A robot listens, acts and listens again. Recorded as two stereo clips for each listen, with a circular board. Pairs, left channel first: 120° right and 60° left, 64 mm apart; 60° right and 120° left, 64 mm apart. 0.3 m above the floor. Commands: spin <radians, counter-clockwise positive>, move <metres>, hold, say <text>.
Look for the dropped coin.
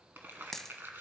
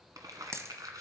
spin 2.71
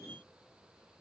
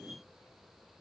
say I heard a dropped coin from this way, but can't make it out now.